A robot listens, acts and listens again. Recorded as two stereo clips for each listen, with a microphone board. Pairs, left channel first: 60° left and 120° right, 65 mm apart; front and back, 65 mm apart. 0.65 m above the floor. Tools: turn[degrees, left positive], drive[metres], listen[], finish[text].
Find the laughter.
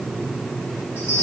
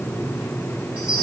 Action: listen[]
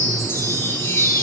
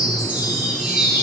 Action: listen[]
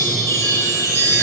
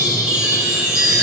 Action: finish[I can't make out laughter, only a chime.]